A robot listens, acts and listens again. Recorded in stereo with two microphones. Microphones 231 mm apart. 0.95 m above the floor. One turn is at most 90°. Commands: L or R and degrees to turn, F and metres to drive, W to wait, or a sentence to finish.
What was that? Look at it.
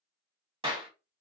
R25
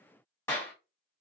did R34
L10
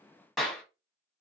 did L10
Facing the clap.